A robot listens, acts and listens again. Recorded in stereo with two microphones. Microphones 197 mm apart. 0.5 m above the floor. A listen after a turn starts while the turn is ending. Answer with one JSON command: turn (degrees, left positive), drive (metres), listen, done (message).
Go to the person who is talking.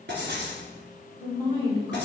{"turn": -25}
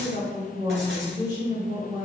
{"turn": -125}
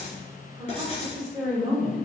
{"drive": 1.0}
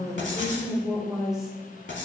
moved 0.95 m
{"drive": 1.0}
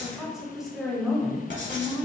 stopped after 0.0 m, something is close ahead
{"done": "Arrived at the woman speaking, straight ahead."}